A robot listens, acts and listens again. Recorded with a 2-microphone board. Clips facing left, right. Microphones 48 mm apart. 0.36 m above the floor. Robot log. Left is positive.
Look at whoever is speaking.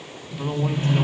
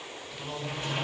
note: The man speaking: about 40° left or 140° left.
cmd yaw +40
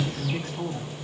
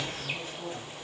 note: So it is at 100° left.
cmd yaw +100
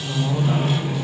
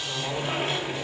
end: Facing the man speaking.